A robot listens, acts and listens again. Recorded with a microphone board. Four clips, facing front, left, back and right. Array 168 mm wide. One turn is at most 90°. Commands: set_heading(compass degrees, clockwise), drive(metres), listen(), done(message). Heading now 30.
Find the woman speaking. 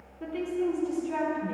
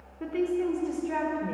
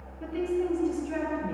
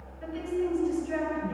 set_heading(310)
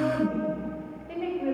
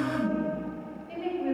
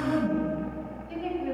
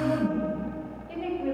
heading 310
set_heading(320)
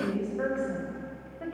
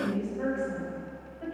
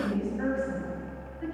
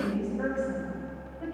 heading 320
done("Found it: a woman speaking, straight ahead, over 4 m away.")